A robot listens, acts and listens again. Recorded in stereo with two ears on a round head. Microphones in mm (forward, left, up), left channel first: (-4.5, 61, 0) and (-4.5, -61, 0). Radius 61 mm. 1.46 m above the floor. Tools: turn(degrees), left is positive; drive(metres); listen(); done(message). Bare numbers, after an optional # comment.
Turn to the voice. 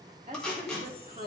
# The woman speaking: about 35° right or 145° right.
turn(-35)
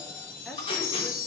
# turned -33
listen()
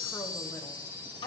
listen()
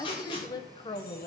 # So it is at 40° left.
turn(40)
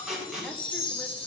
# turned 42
listen()
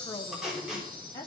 # The woman speaking is now 25° left.
turn(25)
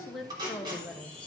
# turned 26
done("Facing the woman speaking, 1 to 2 m away.")